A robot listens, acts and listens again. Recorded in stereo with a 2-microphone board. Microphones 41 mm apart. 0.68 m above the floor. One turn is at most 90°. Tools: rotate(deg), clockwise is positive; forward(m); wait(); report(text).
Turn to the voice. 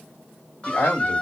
rotate(-75)
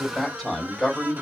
rotate(-10)
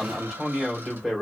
report("Facing the man speaking.")